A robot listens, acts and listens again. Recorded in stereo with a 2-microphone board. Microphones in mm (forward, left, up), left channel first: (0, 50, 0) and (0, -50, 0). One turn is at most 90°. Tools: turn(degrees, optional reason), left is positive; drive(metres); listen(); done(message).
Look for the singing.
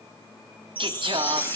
turn(degrees=-55, reason="The singing: about 55° right or 125° right.")
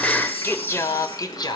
turn(degrees=45, reason="So it is at 45° left.")
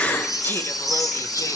turn(degrees=25, reason="The singing is now 25° left.")
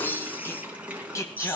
turn(degrees=30, reason="The singing is now 30° left.")
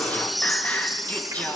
turn(degrees=15, reason="The singing is now 15° left.")
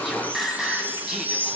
done("Found it: singing, straight ahead, 2 to 4 m away.")